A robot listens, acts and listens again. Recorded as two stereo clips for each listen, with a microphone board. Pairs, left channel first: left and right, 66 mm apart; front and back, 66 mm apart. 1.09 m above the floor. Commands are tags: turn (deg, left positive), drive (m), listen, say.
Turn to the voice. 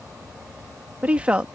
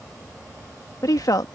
<turn deg="-15"/>
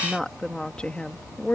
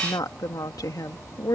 <turn deg="25"/>
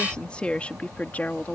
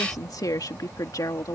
<turn deg="25"/>
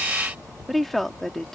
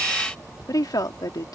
<say>Found it: a woman speaking, straight ahead.</say>